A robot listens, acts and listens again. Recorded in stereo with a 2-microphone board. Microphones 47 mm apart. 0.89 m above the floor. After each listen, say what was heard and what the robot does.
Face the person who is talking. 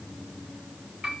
Keep listening.
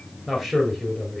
Turn 30° left.
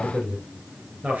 So it is at 30° right. Turn 30° right.
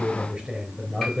The man speaking is now 15° right. Turn 15° right.
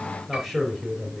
Found it: a man speaking, straight ahead.